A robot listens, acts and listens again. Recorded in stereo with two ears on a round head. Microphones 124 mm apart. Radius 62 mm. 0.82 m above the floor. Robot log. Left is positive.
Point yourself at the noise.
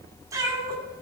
note: The cat meowing: about 30° right or 150° right.
cmd yaw -30
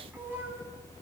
note: The cat meowing: about 20° right or 160° right.
cmd yaw -20
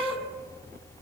note: The cat meowing: about 15° right or 165° right.
cmd yaw -15
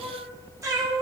note: The cat meowing: about 25° right or 155° right.
cmd yaw -25
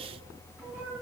note: So it is at 10° right.
cmd yaw -10
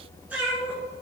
note: The cat meowing is now 15° right.
cmd yaw -15
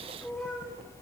end: Found it: a cat meowing, straight ahead.